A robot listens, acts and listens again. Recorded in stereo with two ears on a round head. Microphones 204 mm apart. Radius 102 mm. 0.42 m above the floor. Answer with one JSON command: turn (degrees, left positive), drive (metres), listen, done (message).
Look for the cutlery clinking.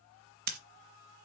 {"listen": true}
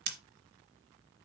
{"listen": true}
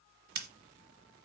{"done": "I can't make out cutlery clinking, only scissors."}